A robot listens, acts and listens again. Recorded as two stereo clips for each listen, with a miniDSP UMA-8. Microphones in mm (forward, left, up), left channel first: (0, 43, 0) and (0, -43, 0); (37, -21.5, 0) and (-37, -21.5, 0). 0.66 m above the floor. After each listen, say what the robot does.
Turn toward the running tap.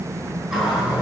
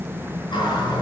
Facing the running tap, over 4 m away.